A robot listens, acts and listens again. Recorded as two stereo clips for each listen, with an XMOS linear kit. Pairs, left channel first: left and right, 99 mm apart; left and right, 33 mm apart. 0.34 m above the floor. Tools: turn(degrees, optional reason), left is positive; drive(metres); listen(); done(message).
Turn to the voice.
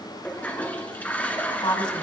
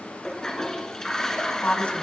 turn(degrees=55, reason="The woman speaking: about 55° left or 125° left.")
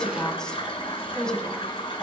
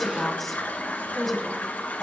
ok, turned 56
turn(degrees=10, reason="So it is at 10° left.")
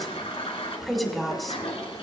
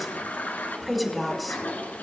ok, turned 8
done("Facing the woman speaking.")